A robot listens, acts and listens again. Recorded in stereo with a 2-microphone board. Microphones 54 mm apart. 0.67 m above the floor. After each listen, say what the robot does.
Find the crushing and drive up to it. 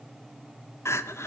Keep listening.
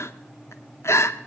Keep listening.
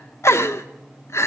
I can't make out crushing to turn to.